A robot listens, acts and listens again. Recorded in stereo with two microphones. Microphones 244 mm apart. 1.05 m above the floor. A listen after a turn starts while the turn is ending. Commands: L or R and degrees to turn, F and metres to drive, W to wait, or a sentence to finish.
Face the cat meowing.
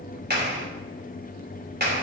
W
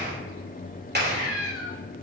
L65
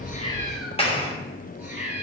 R10
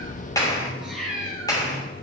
Facing the cat meowing.